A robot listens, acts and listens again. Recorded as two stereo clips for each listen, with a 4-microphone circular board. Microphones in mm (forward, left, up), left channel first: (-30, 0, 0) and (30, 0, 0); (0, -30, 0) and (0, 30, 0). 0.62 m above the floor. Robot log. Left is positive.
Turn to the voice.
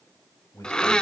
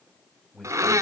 note: The man speaking: 175° right.
cmd yaw -175
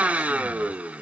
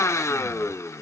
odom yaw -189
note: Nothing new. It was at 10° left.
cmd yaw +10
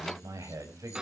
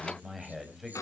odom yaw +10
end: Facing the man speaking.